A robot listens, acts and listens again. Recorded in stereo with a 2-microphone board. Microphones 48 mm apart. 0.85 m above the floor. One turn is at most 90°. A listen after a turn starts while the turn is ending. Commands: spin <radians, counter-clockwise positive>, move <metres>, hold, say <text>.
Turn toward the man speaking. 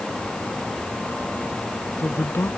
spin 1.05
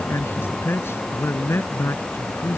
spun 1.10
spin 1.05
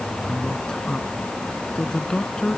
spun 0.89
spin 0.26
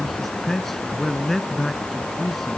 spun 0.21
say Found it: a man speaking, straight ahead.